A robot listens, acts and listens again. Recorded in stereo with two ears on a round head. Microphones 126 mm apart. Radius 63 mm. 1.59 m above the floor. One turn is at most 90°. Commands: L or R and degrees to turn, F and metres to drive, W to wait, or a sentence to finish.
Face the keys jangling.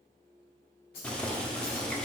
L90
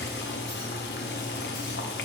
W
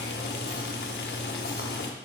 W
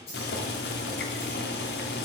L45
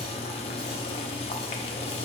W
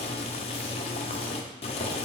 W
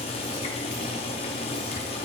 I heard keys jangling from this way, but can't make it out now.